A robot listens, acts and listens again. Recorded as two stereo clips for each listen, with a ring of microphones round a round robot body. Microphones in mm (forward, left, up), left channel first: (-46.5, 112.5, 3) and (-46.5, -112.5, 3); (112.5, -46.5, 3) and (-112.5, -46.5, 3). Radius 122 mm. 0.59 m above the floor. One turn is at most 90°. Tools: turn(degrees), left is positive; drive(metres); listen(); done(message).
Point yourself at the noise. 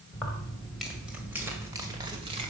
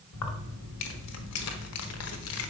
turn(degrees=-20)
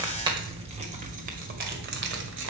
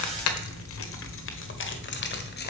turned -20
turn(degrees=-45)
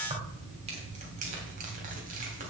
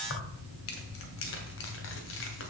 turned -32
turn(degrees=-30)
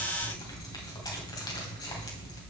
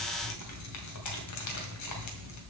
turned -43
turn(degrees=15)
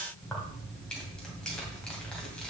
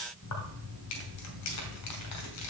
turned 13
done("Found it: keys jangling, straight ahead.")